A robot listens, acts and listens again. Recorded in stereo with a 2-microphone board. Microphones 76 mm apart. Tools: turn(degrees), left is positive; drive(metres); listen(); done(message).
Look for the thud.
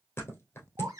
turn(degrees=25)
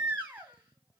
listen()
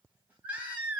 done("I heard a thud, but can't make it out now. It was about straight ahead or 130° left.")